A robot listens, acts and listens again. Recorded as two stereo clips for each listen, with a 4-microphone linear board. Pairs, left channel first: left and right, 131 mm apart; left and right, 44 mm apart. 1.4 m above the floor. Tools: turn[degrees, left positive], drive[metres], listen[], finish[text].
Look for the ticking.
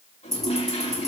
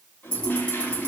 Thought: The ticking: about 25° left or 155° left.
Action: turn[25]
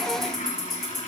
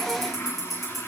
Action: finish[Facing the ticking.]